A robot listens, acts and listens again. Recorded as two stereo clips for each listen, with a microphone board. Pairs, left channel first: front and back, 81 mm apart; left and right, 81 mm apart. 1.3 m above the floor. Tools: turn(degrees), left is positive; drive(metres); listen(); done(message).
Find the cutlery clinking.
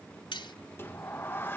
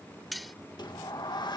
done("Found it: cutlery clinking, straight ahead.")